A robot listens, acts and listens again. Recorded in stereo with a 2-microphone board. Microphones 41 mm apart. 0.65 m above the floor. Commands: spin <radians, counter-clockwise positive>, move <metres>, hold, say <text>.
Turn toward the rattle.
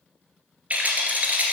spin -0.70
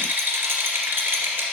spin -1.75
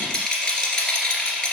spin 0.35
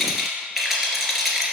say Found it: a rattle, straight ahead.